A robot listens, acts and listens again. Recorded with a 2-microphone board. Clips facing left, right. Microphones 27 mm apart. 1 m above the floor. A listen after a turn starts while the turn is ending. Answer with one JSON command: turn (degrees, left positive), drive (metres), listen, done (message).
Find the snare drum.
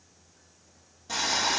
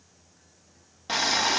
{"listen": true}
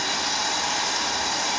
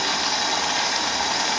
{"listen": true}
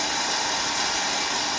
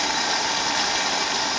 {"done": "I can't make out a snare drum, only boiling."}